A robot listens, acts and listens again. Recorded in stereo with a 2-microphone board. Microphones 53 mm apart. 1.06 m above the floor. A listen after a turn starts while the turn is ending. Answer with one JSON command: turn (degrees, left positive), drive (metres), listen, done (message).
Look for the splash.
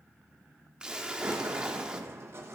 {"turn": -30}
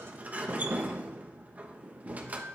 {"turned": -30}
{"listen": true}
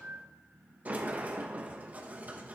{"done": "I heard a splash, but can't make it out now. It was about 15° left or 135° right."}